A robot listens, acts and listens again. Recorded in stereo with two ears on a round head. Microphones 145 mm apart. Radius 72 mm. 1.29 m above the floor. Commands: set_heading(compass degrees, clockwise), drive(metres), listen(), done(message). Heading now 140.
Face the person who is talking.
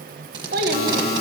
set_heading(200)
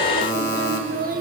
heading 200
set_heading(255)
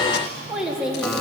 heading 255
done("Found it: a child speaking, straight ahead, 1 to 2 m away.")